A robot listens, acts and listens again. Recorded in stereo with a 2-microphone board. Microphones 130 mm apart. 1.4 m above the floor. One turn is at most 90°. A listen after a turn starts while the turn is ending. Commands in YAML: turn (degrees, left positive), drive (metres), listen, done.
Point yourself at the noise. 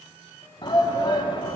turn: 35
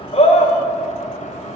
listen: true
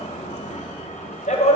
turn: 90
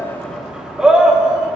done: "Found it: a shout, straight ahead."